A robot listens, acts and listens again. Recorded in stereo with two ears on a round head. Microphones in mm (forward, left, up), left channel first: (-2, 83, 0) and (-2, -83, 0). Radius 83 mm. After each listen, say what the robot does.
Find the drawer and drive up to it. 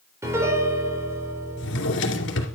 Turn 70° left.
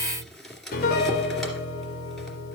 Drive 1.0 m forward.
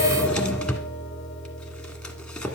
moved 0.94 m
Drive 1.0 m forward.
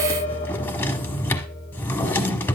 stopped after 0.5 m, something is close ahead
Turn 15° left.
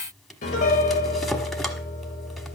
Keep listening.
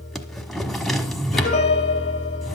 I am next to the drawer.